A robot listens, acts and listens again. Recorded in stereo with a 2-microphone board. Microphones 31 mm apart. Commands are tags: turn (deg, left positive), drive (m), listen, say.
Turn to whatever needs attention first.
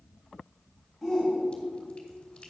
<turn deg="30"/>
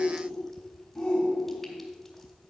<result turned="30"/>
<turn deg="150"/>
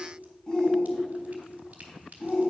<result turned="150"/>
<turn deg="30"/>
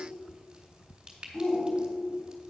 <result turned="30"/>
<say>Facing the shout, 2 to 4 m away.</say>